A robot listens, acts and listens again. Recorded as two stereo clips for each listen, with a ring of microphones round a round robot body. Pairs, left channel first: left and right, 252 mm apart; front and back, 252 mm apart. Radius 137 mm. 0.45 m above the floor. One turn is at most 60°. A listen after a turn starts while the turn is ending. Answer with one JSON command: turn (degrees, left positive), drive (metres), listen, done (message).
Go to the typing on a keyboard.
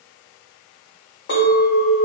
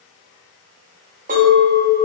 {"listen": true}
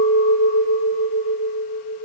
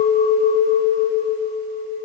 {"listen": true}
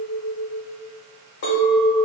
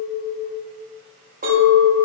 {"done": "I can't make out typing on a keyboard to turn to."}